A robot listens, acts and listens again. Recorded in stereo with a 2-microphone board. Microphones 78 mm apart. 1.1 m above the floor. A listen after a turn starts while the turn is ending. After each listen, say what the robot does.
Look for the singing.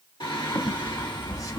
Turn 70° left.
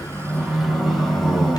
Found it: singing, straight ahead.